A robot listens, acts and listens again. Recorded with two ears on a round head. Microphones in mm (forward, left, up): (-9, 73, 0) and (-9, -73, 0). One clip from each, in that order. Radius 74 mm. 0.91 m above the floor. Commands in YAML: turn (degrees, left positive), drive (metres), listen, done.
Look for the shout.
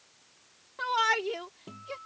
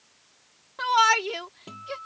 turn: -30
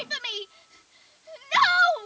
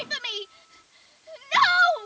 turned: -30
done: "Facing the shout."